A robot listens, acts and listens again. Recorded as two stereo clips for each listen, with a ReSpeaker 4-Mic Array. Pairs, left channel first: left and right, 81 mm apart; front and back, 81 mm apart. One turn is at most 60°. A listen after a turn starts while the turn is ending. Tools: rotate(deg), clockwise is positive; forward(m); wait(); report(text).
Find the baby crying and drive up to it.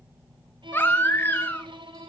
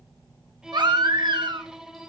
rotate(-60)
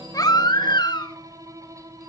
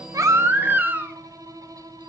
rotate(-60)
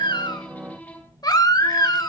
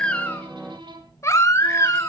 rotate(-55)
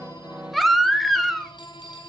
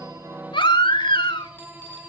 forward(1.0)
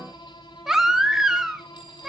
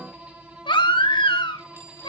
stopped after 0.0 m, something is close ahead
report("Something is in my way. I am facing the baby crying but have not reached it.")